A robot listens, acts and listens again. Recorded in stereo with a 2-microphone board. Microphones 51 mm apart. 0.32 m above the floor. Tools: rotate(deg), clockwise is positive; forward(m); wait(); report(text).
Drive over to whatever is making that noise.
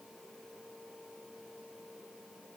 wait()
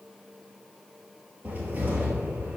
rotate(35)
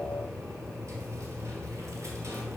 rotate(115)
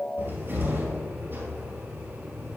rotate(45)
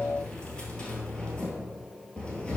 rotate(-20)
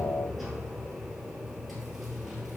forward(1.0)
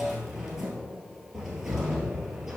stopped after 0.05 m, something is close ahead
rotate(10)
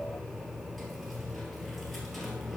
report("Blocked. The cupboard door is further on, straight ahead.")